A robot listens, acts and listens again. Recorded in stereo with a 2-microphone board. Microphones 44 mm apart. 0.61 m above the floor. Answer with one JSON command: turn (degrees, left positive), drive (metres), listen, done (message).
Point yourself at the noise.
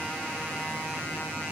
{"listen": true}
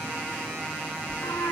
{"turn": 75}
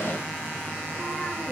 {"listen": true}
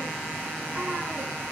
{"listen": true}
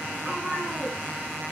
{"turn": -25}
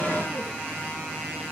{"listen": true}
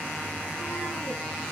{"listen": true}
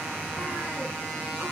{"done": "I heard a cat meowing from this way, but can't make it out now."}